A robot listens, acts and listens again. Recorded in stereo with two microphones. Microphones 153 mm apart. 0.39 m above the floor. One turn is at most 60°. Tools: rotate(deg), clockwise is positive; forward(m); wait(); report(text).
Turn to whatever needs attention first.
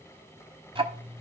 wait()
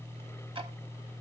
wait()
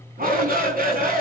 rotate(60)
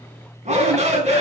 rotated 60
rotate(50)
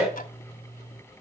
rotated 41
report("Facing the shout, over 4 m away.")